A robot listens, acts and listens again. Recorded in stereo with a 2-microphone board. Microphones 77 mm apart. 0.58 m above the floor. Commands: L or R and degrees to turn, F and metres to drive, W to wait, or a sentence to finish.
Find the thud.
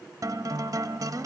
W
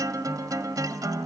W
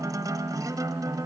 I can't make out a thud, only a guitar.